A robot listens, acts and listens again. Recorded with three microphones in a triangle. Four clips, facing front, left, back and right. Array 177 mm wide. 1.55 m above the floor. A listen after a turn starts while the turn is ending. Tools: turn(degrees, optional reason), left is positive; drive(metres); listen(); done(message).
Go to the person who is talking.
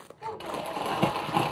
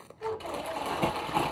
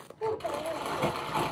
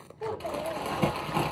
turn(degrees=-145, reason="The child speaking: 145° right.")
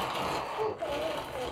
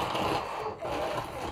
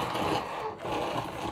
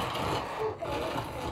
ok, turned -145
drive(metres=1.0)
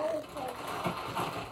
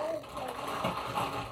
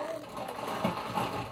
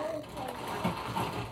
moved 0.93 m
drive(metres=1.0)
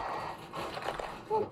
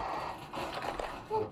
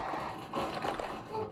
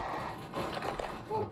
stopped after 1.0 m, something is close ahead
done("I am next to the child speaking.")